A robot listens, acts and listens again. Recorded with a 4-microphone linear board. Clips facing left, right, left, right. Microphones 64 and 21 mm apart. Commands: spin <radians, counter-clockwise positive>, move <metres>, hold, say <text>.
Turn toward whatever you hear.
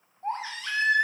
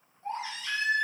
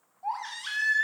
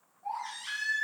spin 0.87
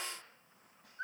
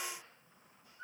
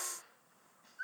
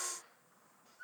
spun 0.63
spin 1.57
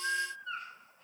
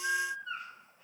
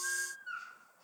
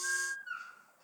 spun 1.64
say Facing the baby crying, 1 to 2 m away.